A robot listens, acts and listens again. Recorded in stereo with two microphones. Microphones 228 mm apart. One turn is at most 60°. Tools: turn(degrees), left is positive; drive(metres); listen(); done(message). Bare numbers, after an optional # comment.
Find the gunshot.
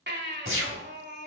# The gunshot: about 65° right or 115° right.
turn(-60)
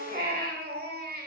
listen()
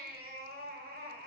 done("I heard a gunshot, but can't make it out now. It was about 5° right or 55° right.")